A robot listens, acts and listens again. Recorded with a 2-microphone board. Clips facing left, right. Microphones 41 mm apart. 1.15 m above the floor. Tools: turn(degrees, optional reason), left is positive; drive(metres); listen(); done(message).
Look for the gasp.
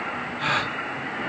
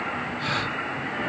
turn(degrees=45, reason="The gasp: about 45° left or 135° left.")
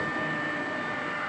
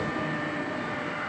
listen()
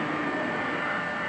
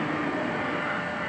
done("I heard a gasp, but can't make it out now. It was about straight ahead or 90° left.")